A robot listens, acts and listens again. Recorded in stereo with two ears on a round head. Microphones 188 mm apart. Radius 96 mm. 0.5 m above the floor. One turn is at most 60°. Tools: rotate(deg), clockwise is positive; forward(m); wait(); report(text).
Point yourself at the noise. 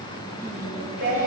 rotate(50)
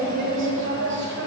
rotate(50)
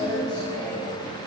rotate(-10)
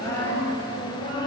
rotate(-25)
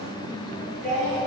report("Facing the singing, 2 to 4 m away.")